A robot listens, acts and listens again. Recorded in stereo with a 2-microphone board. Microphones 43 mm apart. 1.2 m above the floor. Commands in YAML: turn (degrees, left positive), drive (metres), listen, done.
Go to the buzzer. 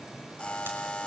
turn: 25
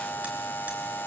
turn: 130
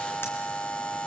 turn: 30
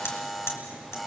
drive: 1.0
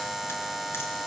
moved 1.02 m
drive: 1.0
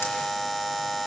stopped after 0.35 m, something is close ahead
done: "I am next to the buzzer."